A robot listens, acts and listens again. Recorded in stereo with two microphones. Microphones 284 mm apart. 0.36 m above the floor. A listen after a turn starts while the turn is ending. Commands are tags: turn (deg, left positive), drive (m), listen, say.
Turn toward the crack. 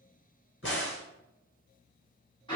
<turn deg="40"/>
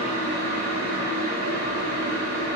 <listen/>
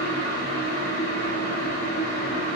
<say>I heard a crack, but can't make it out now. It was about straight ahead or 100° left.</say>